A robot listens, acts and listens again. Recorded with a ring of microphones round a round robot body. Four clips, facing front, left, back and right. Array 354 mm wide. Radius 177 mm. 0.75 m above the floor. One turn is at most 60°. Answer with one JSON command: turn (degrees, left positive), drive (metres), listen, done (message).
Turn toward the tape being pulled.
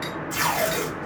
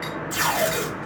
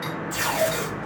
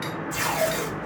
{"turn": 55}
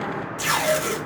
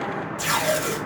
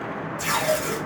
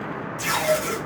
{"done": "Facing the tape being pulled."}